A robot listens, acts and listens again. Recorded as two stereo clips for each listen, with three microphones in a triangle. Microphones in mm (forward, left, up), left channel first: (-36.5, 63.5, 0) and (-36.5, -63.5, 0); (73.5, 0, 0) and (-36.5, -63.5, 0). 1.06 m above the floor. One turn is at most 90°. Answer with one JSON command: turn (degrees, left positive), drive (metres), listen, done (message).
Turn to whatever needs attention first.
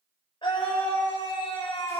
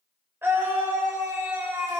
{"turn": 90}
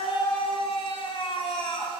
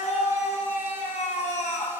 {"turn": 45}
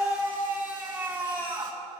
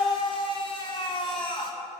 {"turn": -15}
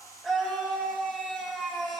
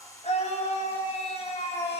{"done": "Facing the scream, 2 to 4 m away."}